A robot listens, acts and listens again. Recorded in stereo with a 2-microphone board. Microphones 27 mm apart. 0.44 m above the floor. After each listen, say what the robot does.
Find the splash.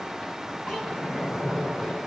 Turn 70° left.
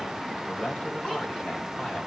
Keep listening.
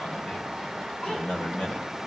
I heard a splash, but can't make it out now. It was about straight ahead or 40° left.